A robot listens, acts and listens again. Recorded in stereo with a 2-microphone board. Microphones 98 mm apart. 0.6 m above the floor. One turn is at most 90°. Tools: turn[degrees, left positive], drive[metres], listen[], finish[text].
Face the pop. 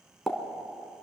Action: turn[30]
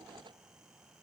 Action: listen[]
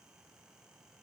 Action: finish[I heard a pop, but can't make it out now. It was about 30° right or 150° left.]